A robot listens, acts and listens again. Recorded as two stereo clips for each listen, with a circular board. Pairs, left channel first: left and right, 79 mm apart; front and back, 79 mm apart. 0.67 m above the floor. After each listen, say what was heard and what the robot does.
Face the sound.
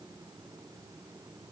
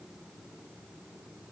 Keep listening.
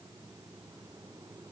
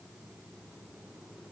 Keep listening.
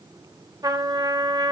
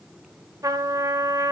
The trumpet: 130° right. Turn 130° right.
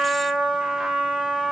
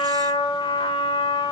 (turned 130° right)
Facing the trumpet.